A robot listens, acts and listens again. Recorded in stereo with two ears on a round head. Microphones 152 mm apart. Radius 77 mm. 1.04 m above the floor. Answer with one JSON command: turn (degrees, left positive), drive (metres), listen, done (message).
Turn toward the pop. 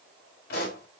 {"turn": 70}
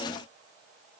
{"listen": true}
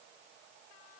{"done": "I heard a pop, but can't make it out now. It was about straight ahead or 40° left."}